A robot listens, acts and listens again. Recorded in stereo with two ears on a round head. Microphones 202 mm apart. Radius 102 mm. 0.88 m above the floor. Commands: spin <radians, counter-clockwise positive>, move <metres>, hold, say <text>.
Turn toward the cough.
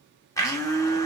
hold
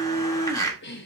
spin 0.87
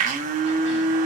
hold
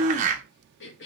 spin 1.13
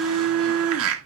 hold
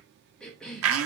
say Found it: a cough, straight ahead.